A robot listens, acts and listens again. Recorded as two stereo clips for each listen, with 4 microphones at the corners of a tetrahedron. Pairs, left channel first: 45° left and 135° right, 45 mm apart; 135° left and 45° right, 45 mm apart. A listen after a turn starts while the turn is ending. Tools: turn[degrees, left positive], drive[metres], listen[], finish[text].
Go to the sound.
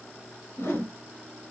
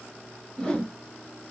Thought: The whoosh: 60° left.
Action: turn[60]
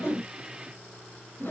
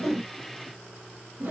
Action: drive[1.0]
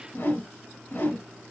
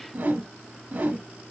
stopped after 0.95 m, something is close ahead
Action: finish[Arrived at the whoosh, straight ahead.]